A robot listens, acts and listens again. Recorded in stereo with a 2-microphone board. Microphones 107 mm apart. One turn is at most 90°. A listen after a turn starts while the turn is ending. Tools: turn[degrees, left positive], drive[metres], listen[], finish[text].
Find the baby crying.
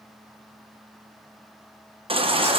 Thought: The baby crying: about 55° right or 125° right.
Action: turn[-55]
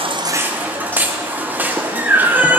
Thought: So it is at 20° right.
Action: turn[-20]
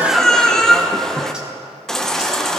Action: finish[Facing the baby crying, under 1 m away.]